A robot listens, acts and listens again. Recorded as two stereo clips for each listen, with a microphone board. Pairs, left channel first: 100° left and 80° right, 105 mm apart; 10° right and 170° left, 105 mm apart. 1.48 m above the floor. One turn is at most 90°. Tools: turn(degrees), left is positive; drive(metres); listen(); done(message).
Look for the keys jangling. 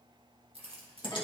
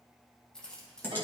turn(degrees=-90)
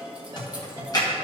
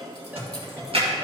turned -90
listen()
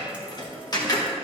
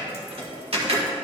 listen()
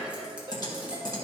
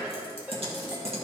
done("Facing where the keys jangling came from. I can't hear it now.")